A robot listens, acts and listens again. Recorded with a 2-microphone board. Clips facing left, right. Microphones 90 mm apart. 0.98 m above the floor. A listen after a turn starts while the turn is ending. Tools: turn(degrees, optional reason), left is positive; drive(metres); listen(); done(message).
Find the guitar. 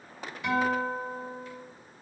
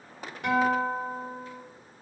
turn(degrees=-65, reason="The guitar: about 65° right or 115° right.")
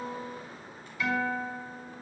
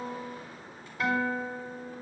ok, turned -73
turn(degrees=-40, reason="So it is at 40° right.")
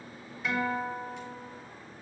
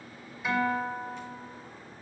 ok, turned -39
done("Found it: a guitar, straight ahead.")